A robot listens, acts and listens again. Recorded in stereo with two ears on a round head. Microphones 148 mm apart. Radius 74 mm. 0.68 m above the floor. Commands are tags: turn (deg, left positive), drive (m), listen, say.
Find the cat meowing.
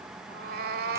<turn deg="-70"/>
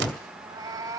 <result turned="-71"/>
<turn deg="-20"/>
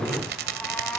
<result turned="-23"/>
<turn deg="10"/>
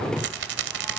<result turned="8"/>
<listen/>
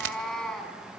<say>Facing the cat meowing.</say>